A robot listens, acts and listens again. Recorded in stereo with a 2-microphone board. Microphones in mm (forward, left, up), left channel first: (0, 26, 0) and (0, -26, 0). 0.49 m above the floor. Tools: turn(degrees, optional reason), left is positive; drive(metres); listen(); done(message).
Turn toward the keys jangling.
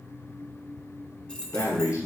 turn(degrees=20, reason="The keys jangling: about 20° left or 160° left.")
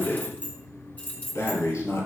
turn(degrees=30, reason="The keys jangling: about 30° left or 150° left.")
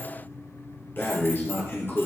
listen()
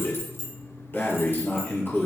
turn(degrees=125, reason="So it is at 125° left.")
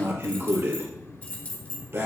turn(degrees=25, reason="The keys jangling is now 25° left.")
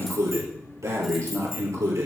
listen()
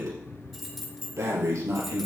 done("Found it: keys jangling, straight ahead.")